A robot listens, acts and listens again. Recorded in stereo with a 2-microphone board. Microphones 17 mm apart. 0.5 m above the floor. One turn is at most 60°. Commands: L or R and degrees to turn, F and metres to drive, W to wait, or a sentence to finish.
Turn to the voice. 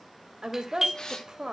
R60
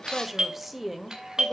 R15
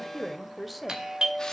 Facing the woman speaking, 1 to 2 m away.